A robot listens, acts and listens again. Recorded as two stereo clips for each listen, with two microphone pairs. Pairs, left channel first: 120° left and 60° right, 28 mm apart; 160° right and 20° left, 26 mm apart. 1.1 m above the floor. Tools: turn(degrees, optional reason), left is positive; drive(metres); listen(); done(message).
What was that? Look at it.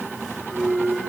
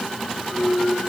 turn(degrees=-65, reason="The clunk: 65° right.")
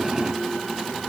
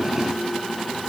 done("I heard a clunk from this way, but can't make it out now.")